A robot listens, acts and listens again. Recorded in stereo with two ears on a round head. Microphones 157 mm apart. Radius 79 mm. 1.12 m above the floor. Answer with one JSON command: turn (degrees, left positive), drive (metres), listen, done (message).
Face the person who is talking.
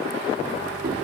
{"listen": true}
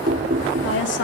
{"turn": 90}
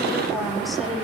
{"done": "Found it: a woman speaking, straight ahead."}